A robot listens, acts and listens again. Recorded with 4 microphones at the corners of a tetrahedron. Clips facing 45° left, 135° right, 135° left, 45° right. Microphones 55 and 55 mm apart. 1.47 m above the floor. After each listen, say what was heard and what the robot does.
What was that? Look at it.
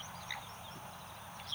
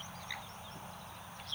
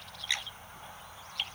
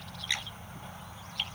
Keep listening.
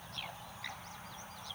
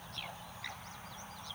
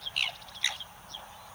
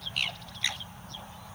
Keep listening.
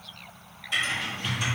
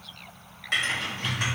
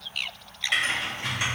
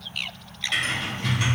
The typing on a keyboard: 155° right. Turn 155° right.
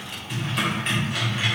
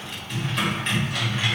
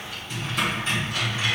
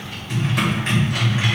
The typing on a keyboard is now 35° right. Turn 35° right.
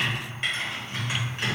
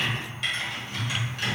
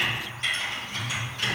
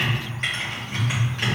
The typing on a keyboard is now 10° right. Turn 10° right.
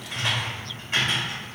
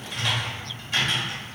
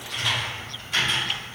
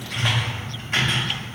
Found it: typing on a keyboard, straight ahead, 2 to 4 m away.